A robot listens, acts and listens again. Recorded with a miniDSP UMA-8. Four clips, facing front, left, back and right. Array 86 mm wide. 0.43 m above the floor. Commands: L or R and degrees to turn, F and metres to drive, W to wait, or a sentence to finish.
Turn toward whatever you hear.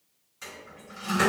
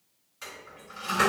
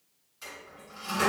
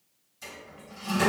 L70
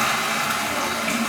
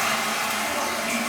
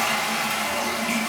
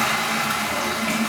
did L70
R20
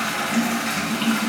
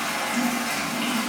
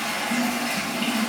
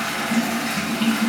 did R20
Found it: a toilet flushing, straight ahead.